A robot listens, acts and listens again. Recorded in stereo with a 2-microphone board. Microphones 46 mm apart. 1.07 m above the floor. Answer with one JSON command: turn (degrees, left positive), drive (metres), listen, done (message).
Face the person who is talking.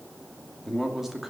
{"turn": -30}
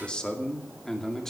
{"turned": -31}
{"turn": 10}
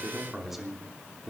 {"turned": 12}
{"turn": -15}
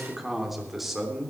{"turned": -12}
{"turn": -10}
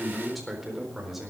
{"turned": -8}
{"done": "Facing the man speaking, over 4 m away."}